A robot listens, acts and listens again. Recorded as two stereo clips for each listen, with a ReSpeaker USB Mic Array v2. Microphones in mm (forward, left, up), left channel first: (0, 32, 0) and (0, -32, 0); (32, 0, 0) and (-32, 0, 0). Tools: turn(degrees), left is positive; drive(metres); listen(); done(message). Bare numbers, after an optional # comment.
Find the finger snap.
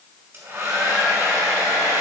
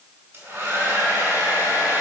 listen()
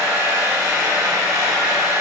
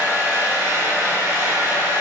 listen()
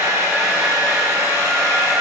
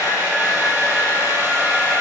done("I can't make out a finger snap to turn to.")